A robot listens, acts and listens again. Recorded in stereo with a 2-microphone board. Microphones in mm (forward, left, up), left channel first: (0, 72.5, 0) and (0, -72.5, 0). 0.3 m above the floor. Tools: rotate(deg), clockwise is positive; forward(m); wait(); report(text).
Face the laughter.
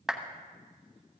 wait()
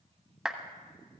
wait()
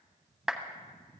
report("I can't make out laughter, only a clap.")